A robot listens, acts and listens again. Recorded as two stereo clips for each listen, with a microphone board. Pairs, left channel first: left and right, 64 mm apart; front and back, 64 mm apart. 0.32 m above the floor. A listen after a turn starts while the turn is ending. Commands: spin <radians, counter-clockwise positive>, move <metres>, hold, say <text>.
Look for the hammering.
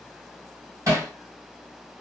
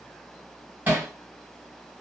spin -2.09
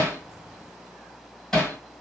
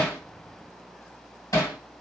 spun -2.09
spin 0.26
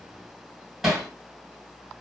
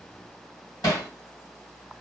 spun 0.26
say Facing the hammering, 2 to 4 m away.